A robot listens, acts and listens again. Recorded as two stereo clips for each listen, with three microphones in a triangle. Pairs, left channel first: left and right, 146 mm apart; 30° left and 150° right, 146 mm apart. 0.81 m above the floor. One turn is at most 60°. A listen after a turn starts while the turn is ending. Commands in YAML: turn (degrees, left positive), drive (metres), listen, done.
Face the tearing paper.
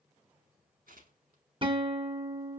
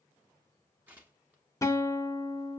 turn: -60
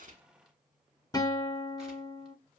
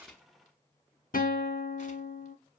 turn: -10
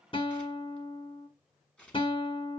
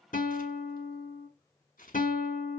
done: "Found it: tearing paper, straight ahead."